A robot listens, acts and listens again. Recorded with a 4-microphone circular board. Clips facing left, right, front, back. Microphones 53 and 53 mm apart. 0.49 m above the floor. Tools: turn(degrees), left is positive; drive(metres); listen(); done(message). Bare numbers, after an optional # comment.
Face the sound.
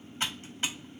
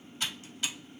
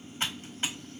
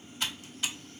# The typing on a keyboard: 45° left.
turn(45)
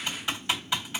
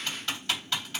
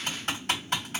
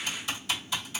# The typing on a keyboard is now 20° left.
turn(20)
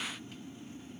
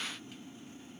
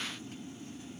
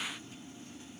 listen()
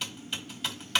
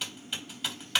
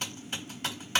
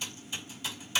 done("Facing the typing on a keyboard, 1 to 2 m away.")